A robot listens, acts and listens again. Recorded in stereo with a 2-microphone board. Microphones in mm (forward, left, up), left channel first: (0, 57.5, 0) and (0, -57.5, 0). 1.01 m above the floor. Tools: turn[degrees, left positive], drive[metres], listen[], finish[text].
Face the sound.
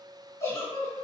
Thought: The giggle: about 25° left or 155° left.
Action: turn[25]
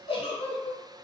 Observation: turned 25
Thought: So it is at 130° left.
Action: turn[130]
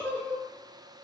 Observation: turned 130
Thought: The giggle is now 15° left.
Action: turn[15]
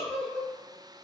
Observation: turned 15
Action: finish[Found it: a giggle, straight ahead.]